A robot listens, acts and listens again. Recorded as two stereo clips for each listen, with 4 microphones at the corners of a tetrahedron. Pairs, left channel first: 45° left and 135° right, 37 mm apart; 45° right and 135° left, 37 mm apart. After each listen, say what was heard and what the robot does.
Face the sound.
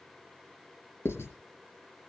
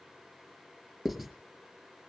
The writing: 40° left. Turn 40° left.
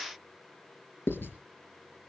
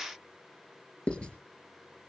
The writing is now 15° left. Turn 15° left.
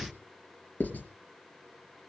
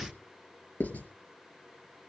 Facing the writing.